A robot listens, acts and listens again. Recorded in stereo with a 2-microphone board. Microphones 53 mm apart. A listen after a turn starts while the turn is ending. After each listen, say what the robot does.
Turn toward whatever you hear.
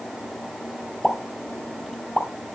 Turn 30° left.
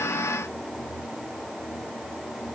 Keep listening.
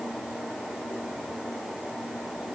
I heard a pop, but can't make it out now. It was about 25° right or 145° left.